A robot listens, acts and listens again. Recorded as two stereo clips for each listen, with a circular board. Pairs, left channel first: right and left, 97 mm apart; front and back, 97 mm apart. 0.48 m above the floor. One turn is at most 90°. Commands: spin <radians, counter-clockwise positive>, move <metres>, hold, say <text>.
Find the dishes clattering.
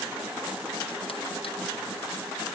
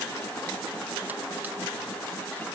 hold
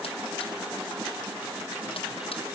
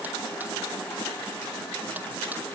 hold
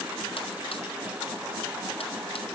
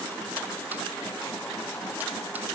say I can't make out dishes clattering.